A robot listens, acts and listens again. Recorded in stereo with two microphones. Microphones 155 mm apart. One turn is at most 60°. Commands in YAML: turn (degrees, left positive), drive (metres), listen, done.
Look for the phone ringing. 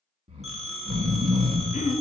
turn: 30
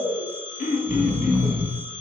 turn: 60
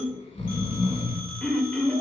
turn: 60
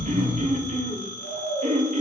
turn: 10
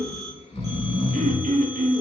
listen: true
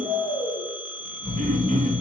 done: "Facing the phone ringing, 1 to 2 m away."